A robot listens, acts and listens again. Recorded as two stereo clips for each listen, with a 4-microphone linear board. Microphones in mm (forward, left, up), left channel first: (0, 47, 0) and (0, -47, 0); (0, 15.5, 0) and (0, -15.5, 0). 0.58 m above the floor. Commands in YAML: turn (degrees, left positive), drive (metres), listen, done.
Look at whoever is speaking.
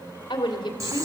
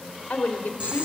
turn: 55
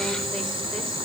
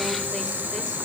listen: true
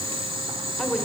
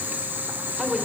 done: "Found it: a woman speaking, straight ahead, 1 to 2 m away."